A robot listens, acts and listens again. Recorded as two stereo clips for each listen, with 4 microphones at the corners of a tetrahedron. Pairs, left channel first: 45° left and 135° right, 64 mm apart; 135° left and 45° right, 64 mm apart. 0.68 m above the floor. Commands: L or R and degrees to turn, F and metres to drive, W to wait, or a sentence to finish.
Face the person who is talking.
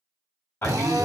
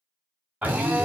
L25
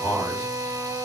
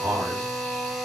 L15
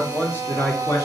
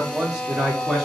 L45
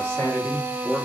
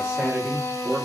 L35
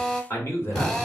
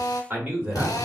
L10
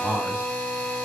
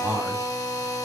Found it: a man speaking, straight ahead, 1 to 2 m away.